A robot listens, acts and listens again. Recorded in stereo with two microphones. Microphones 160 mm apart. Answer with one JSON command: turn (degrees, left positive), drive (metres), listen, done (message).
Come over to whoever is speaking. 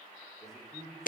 {"turn": 30}
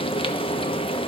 {"listen": true}
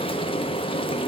{"listen": true}
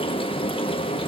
{"done": "I heard a man speaking, but can't make it out now. It was about 30° right or 150° left. I did not reach it."}